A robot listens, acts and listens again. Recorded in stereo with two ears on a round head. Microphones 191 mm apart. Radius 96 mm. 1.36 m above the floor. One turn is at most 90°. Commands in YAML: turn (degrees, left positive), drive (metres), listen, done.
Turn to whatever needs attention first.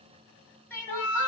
turn: 30
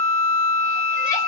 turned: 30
listen: true
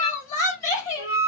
turn: 90
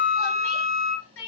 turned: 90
turn: 70
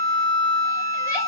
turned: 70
listen: true
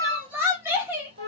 turn: -10
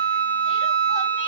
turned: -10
listen: true
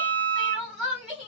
done: "Facing the crying, 2 to 4 m away."